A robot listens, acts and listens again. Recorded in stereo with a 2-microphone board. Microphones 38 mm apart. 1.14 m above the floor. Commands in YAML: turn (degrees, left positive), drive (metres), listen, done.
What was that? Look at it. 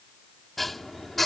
turn: 30
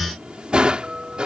turn: -25
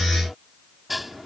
done: "Facing the dishes clattering."